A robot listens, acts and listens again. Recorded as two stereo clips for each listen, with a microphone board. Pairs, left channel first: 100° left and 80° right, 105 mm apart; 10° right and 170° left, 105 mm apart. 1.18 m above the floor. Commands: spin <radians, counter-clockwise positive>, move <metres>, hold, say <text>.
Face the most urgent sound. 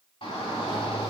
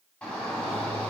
spin 1.13
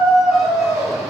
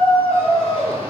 say Found it: a shout, straight ahead, 2 to 4 m away.